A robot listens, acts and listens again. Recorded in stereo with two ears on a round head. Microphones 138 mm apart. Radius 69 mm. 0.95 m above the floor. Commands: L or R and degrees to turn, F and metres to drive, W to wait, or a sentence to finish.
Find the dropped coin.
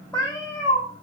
W
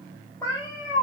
W
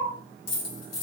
L60
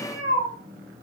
W
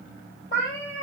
I heard a dropped coin, but can't make it out now. It was about straight ahead or 60° left.